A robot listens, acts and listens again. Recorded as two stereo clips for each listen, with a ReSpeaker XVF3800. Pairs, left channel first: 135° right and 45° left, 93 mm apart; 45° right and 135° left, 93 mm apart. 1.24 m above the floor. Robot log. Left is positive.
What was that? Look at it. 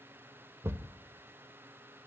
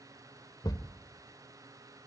note: The thud: 10° right.
cmd yaw -10
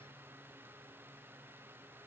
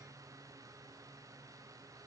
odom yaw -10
end: I heard a thud from this way, but can't make it out now.